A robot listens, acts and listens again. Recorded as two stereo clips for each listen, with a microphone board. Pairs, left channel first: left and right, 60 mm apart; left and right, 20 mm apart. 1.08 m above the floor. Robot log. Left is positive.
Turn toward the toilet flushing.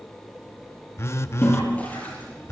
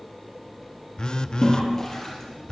note: The toilet flushing: about 25° left or 155° left.
cmd yaw +25
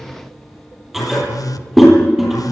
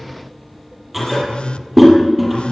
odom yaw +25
end: Facing the toilet flushing.